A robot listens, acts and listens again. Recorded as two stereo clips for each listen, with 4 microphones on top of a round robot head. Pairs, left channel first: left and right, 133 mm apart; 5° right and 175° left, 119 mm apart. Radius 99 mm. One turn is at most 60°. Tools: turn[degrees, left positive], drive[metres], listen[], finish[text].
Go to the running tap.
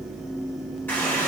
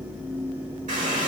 Thought: The running tap: 165° left.
Action: turn[60]
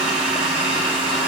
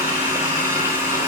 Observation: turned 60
Thought: The running tap is now 105° left.
Action: turn[60]
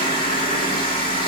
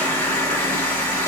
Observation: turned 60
Thought: The running tap is now 55° left.
Action: turn[55]
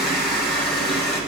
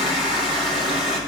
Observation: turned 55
Action: drive[1.0]
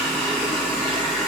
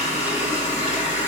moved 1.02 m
Thought: The running tap is now 10° left.
Action: turn[10]
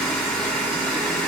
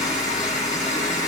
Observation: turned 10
Action: drive[1.0]
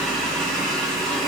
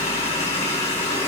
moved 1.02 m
Action: drive[1.0]
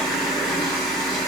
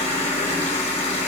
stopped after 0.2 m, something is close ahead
Action: finish[I am next to the running tap.]